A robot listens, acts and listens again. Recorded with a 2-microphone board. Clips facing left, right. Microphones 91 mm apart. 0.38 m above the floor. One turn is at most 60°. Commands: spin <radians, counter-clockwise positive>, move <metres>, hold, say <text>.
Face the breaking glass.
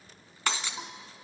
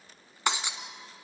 spin -0.35
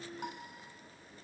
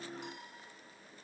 hold
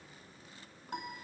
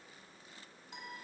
say I heard breaking glass, but can't make it out now. It was about straight ahead or 140° right.